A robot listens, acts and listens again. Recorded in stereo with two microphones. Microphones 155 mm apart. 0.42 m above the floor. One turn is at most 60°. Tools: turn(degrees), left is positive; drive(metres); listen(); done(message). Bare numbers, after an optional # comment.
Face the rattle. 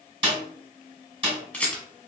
turn(30)
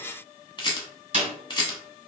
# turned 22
# So it is at 150° left.
turn(60)
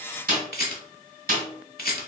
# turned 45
# The rattle is now 105° left.
turn(60)
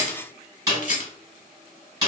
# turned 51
# The rattle is now 55° left.
turn(55)
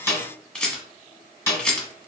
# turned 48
done("Facing the rattle.")